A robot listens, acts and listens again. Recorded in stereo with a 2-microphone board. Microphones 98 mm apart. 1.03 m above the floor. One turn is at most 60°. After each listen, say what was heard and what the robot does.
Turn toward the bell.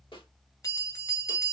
The bell: about 30° left or 150° left. Turn 30° left.
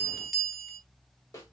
Found it: a bell, straight ahead, 1 to 2 m away.